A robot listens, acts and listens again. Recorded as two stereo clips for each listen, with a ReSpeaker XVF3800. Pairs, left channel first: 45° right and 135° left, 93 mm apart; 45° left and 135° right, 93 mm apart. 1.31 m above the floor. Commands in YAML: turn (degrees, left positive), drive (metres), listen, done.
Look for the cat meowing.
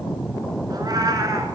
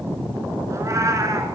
turn: 180
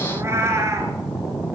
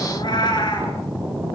turn: 80
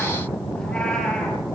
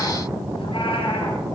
listen: true
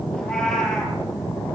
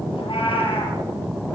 turn: 40
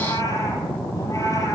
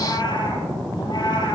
turn: 10
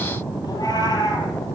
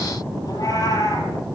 done: "Found it: a cat meowing, straight ahead."